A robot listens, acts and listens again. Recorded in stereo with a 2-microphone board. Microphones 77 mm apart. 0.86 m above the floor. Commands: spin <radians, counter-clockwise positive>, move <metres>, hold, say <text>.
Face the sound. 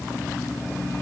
hold
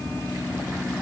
hold
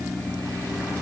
say I can't make out anything.